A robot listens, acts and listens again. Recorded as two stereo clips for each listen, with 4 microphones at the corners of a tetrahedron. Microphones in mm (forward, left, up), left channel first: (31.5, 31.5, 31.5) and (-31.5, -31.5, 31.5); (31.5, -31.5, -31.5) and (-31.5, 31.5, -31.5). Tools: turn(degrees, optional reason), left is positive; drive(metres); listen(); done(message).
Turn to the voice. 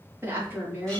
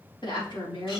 turn(degrees=-70, reason="The woman speaking: 70° right.")
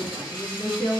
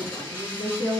turn(degrees=-20, reason="The woman speaking is now 20° right.")
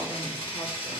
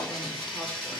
listen()
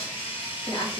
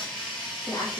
done("Found it: a woman speaking, straight ahead.")